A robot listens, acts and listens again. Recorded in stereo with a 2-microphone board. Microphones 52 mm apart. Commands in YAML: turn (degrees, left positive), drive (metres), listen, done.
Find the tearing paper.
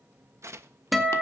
turn: -65
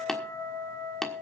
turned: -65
listen: true
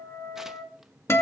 listen: true
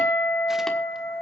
done: "I heard tearing paper, but can't make it out now. It was about straight ahead or 50° right."